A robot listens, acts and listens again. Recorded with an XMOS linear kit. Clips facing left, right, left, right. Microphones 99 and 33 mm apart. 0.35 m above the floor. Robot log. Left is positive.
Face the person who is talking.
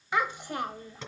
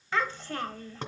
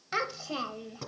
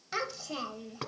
note: The child speaking: about 15° left or 165° left.
cmd yaw +15
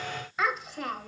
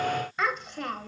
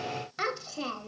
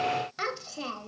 end: Facing the child speaking.